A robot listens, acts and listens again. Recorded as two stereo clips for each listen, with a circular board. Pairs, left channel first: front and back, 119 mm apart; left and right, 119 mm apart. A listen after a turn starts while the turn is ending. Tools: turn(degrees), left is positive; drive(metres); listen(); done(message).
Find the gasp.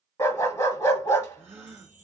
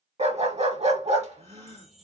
turn(degrees=-110)
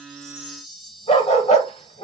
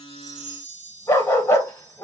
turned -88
turn(degrees=-20)
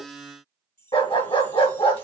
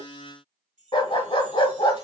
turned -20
done("I heard a gasp from this way, but can't make it out now.")